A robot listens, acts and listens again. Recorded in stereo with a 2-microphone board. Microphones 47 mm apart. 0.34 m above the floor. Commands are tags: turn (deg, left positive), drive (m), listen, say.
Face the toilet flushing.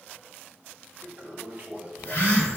<turn deg="-35"/>
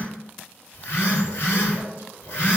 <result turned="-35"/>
<listen/>
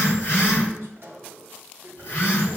<turn deg="-100"/>
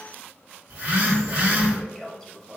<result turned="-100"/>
<turn deg="10"/>
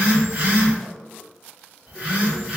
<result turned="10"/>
<listen/>
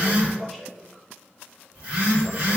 <say>Found it: a toilet flushing, straight ahead, under 1 m away.</say>